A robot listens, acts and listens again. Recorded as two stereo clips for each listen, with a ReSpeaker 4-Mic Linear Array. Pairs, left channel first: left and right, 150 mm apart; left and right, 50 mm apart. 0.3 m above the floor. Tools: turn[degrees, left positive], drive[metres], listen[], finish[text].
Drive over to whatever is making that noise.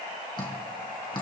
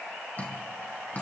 Thought: The dripping: about 30° left or 150° left.
Action: turn[30]
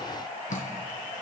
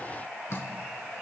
Thought: So it is at 120° left.
Action: turn[120]
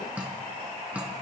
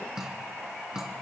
Thought: The dripping is now 10° right.
Action: turn[-10]
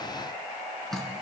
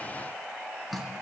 Action: drive[1.0]
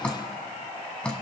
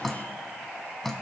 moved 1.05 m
Thought: The dripping is now 10° left.
Action: turn[10]
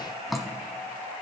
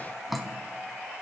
Action: drive[1.0]
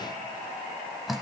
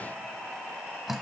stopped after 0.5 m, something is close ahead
Action: finish[Arrived at the dripping, straight ahead.]